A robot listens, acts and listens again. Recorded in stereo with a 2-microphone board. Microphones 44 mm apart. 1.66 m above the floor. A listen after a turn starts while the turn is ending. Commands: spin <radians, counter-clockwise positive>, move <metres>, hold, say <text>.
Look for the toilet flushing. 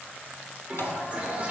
spin -0.52
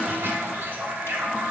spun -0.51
spin -1.92
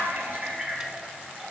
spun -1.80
spin -0.17
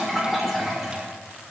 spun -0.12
say Found it: a toilet flushing, straight ahead.